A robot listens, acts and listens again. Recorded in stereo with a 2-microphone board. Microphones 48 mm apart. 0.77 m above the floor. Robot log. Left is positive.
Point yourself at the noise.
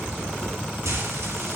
cmd yaw -90
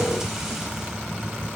cmd idle
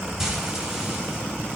note: The frying is now 10° right.
cmd yaw -10
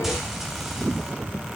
end: Found it: frying, straight ahead.